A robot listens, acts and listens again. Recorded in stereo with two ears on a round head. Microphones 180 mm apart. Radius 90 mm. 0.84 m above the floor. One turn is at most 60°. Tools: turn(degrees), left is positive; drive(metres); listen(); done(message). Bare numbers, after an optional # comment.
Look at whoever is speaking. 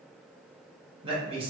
# The man speaking: about 25° right or 155° right.
turn(-25)
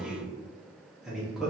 done("Found it: a man speaking, straight ahead.")